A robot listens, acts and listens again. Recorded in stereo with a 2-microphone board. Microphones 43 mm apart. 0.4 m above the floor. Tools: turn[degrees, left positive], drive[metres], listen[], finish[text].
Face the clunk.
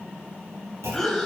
Action: turn[-90]
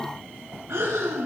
Action: finish[Facing where the clunk came from. I can't hear it now.]